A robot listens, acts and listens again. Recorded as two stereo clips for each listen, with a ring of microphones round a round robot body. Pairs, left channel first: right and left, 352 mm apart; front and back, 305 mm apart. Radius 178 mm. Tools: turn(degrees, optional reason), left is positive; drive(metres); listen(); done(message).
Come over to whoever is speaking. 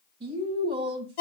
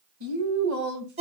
turn(degrees=165, reason="The woman speaking: 165° left.")
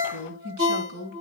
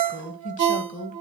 turn(degrees=60, reason="The woman speaking is now 60° left.")
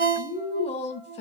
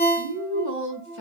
turn(degrees=-20, reason="The woman speaking is now 20° right.")
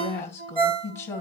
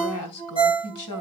turn(degrees=-10, reason="The woman speaking is now 10° right.")
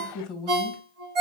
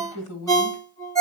drive(metres=1.0)
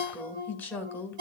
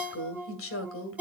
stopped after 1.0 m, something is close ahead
done("I am next to the woman speaking.")